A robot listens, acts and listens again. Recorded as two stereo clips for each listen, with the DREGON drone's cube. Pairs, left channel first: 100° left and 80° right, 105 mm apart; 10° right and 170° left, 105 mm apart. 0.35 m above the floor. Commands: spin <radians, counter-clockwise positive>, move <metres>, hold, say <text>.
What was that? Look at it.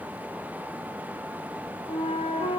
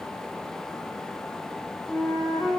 spin 1.31
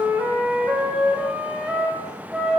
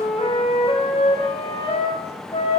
say Facing the flute, over 4 m away.